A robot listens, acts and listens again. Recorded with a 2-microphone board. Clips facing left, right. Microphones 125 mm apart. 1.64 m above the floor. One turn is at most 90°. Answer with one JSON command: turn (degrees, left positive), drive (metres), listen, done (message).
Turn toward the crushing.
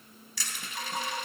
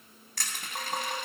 {"turn": -55}
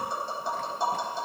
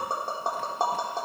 {"listen": true}
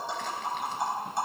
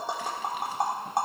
{"listen": true}
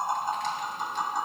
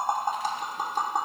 {"done": "I heard crushing, but can't make it out now. It was about straight ahead or 70° right."}